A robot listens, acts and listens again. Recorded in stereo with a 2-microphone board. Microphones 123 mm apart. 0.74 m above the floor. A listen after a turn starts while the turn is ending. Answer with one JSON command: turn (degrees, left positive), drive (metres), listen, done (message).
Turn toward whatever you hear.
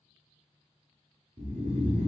{"turn": -70}
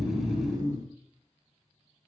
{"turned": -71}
{"turn": -35}
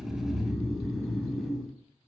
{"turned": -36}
{"done": "Found it: snoring, straight ahead, 1 to 2 m away."}